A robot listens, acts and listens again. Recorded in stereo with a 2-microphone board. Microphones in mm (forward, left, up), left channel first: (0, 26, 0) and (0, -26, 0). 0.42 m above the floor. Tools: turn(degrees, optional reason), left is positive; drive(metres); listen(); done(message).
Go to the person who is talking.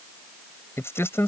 turn(degrees=60, reason="The man speaking: about 60° left or 120° left.")
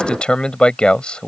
turn(degrees=25, reason="So it is at 25° left.")
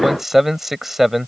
drive(metres=1.0)
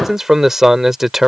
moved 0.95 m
turn(degrees=-10, reason="The man speaking is now 10° right.")
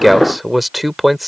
drive(metres=1.0)
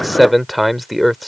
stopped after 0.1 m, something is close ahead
done("Arrived at the man speaking, straight ahead.")